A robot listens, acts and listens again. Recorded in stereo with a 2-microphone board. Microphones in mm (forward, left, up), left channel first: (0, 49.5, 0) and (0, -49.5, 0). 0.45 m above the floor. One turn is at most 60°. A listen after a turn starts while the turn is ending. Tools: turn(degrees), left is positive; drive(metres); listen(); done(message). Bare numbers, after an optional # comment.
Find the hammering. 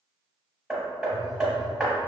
turn(-30)
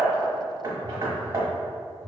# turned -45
# So it is at 130° right.
turn(-60)
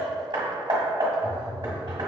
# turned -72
# The hammering is now 60° right.
turn(-60)
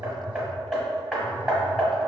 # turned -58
done("Facing the hammering, 1 to 2 m away.")